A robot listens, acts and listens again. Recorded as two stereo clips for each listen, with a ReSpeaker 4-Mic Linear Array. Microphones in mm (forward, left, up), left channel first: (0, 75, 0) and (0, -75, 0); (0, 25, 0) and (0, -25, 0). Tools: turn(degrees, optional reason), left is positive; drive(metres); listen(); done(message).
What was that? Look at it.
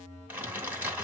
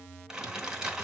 turn(degrees=-30)
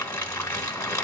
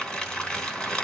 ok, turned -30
turn(degrees=20, reason="So it is at 20° left.")
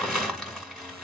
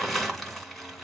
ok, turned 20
done("Found it: crumpling, straight ahead, 2 to 4 m away.")